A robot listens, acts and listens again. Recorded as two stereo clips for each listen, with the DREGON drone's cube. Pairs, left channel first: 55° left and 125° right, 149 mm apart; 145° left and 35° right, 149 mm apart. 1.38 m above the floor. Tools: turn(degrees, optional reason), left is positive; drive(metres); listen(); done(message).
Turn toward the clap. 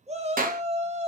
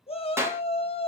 turn(degrees=-105, reason="The clap: 105° right.")
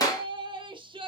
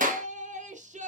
turn(degrees=-10, reason="The clap is now 10° right.")
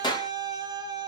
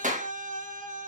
done("Found it: a clap, straight ahead.")